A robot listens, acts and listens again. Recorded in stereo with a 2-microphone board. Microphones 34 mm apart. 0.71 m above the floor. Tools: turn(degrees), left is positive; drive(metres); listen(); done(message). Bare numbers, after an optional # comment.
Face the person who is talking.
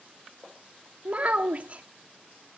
# The child speaking: about 40° right or 140° right.
turn(-40)
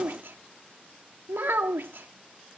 # So it is at 100° right.
turn(-100)
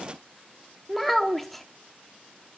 done("Facing the child speaking, under 1 m away.")